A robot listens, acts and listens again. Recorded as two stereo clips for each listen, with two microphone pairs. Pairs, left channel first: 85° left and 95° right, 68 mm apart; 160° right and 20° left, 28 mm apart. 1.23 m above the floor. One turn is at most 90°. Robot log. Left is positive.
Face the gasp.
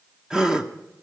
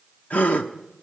note: The gasp: 170° right.
cmd yaw -90
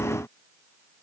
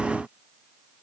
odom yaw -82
note: Nothing new. It was at 90° right.
cmd yaw -90
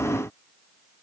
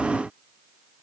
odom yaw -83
end: I heard a gasp from this way, but can't make it out now.